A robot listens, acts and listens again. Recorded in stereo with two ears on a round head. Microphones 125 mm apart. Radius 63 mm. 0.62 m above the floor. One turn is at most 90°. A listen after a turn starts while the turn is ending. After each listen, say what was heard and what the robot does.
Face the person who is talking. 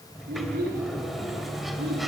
Turn 90° right.
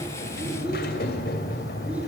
Keep listening.
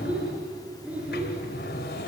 The child speaking is now 10° right. Turn 10° right.
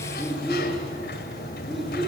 Facing the child speaking, over 4 m away.